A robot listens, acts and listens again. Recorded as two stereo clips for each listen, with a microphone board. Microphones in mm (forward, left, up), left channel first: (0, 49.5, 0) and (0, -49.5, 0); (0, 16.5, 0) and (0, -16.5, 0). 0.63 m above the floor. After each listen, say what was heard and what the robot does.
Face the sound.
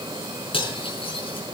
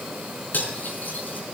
Turn 90° left.
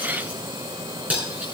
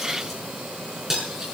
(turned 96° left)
So it is at 15° right. Turn 15° right.
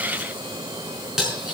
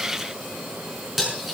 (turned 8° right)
Found it: cutlery clinking, straight ahead.